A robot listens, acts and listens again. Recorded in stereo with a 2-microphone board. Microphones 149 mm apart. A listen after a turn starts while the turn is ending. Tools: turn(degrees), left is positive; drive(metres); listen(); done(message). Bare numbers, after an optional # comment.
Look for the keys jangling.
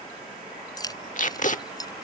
# The keys jangling: about 25° left or 155° left.
turn(25)
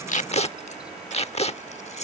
# So it is at 130° left.
turn(130)
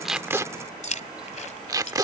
# The keys jangling is now 50° left.
turn(50)
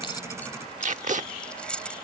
done("Facing the keys jangling.")